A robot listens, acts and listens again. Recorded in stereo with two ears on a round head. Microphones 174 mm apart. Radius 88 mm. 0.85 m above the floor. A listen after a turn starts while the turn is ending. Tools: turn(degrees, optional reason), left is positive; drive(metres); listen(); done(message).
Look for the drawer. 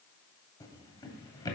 turn(degrees=20, reason="The drawer: about 20° left or 160° left.")
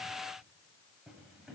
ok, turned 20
done("Found it: a drawer, straight ahead.")